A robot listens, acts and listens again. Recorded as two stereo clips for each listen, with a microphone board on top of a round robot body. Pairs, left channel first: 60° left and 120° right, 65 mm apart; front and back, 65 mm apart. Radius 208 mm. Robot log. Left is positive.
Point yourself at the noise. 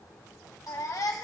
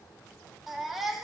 note: The baby crying: 90° left.
cmd yaw +90
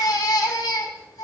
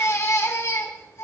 note: The baby crying is now 45° left.
cmd yaw +45
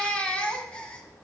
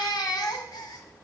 note: The baby crying is now 10° right.
cmd yaw -10
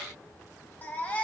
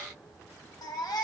end: Facing the baby crying.